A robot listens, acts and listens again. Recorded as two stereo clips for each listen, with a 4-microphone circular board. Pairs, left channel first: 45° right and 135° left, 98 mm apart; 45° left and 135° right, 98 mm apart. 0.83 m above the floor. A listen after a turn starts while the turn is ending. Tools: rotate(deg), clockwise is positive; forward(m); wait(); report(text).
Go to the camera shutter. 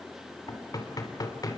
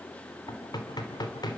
wait()
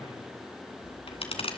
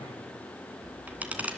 rotate(60)
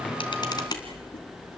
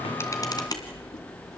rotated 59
forward(1.0)
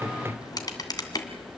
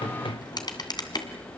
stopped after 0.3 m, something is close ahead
report("Blocked. The camera shutter is further on, straight ahead.")